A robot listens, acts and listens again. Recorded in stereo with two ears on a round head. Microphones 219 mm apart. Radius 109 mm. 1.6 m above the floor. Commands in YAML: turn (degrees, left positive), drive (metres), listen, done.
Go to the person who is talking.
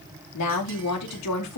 turn: 90
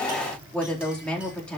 drive: 1.0
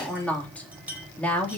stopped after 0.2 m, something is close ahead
done: "Blocked. The woman speaking is further on, straight ahead."